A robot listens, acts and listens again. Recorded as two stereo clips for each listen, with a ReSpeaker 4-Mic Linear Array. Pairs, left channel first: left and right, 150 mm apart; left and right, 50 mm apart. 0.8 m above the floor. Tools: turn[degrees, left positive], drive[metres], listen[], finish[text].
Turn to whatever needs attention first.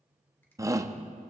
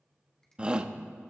Thought: The shout: about 20° right or 160° right.
Action: turn[-20]
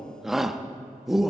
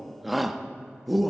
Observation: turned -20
Action: finish[Facing the shout.]